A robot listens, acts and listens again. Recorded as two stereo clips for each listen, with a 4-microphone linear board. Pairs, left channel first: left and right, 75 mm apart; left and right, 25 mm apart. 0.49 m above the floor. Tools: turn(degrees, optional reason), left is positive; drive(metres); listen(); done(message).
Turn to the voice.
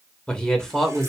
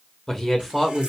turn(degrees=30)
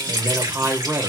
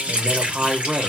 turn(degrees=-40, reason="So it is at 40° right.")
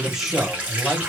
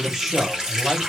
turn(degrees=-10, reason="The man speaking is now 10° right.")
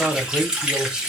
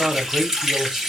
turn(degrees=-10, reason="The man speaking is now 10° right.")
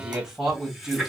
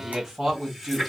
turn(degrees=-10, reason="The man speaking is now 10° right.")
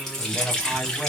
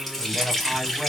done("Facing the man speaking.")